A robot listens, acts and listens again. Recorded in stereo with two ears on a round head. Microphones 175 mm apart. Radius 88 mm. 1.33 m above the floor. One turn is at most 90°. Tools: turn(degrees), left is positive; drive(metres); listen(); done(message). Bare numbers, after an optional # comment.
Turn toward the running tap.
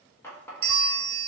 turn(30)
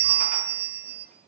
listen()
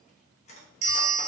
# So it is at 135° left.
turn(90)
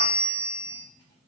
# Nothing new. It was at 45° left.
turn(45)
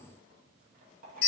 # The running tap is now 50° right.
turn(-50)
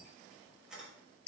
done("Found it: a running tap, straight ahead.")